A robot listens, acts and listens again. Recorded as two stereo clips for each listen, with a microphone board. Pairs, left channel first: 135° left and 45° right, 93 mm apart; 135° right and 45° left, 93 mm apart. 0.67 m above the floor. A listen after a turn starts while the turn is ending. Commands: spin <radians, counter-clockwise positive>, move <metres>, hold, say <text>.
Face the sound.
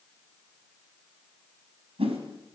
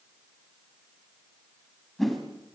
spin -0.87
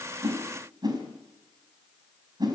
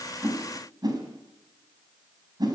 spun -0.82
say Facing the whoosh.